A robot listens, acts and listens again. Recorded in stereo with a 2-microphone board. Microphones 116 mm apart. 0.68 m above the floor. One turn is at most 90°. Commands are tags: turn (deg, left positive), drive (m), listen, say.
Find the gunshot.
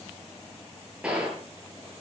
<turn deg="-30"/>
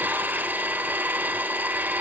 <listen/>
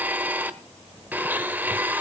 <say>I heard a gunshot, but can't make it out now. It was about 20° left or 140° right.</say>